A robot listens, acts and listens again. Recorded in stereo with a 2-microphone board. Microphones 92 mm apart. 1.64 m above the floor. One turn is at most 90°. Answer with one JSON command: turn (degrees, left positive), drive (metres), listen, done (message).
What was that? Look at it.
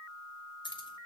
{"turn": 60}
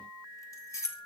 {"turn": 30}
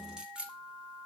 {"turn": -15}
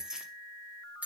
{"turn": -15}
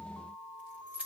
{"turn": -15}
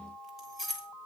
{"done": "Facing the keys jangling."}